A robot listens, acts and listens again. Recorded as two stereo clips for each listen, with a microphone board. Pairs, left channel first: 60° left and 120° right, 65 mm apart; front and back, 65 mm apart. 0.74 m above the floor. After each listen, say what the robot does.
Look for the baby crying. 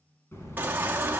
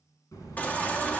Turn 65° right.
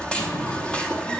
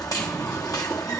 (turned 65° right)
Turn 10° right.
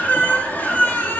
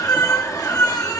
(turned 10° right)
Facing the baby crying.